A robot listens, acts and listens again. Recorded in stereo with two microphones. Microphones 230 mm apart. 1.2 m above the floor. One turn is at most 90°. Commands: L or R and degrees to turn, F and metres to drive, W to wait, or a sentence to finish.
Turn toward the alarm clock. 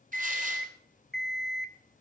L30
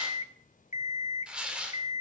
L90
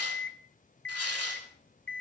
L60
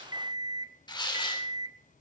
R20
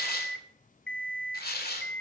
Found it: an alarm clock, straight ahead.